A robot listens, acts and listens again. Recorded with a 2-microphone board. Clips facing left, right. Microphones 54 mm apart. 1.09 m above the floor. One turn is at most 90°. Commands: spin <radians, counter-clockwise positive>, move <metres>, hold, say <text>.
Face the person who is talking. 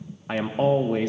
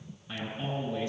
spin 0.96
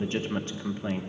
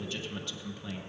spin 0.70
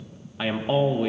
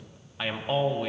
say Facing the man speaking, under 1 m away.